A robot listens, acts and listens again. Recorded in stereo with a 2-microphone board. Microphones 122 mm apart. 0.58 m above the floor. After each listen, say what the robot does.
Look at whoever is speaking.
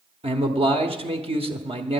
Turn 50° right.
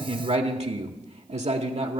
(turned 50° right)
Turn 70° right.
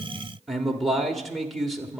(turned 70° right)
Facing the man speaking.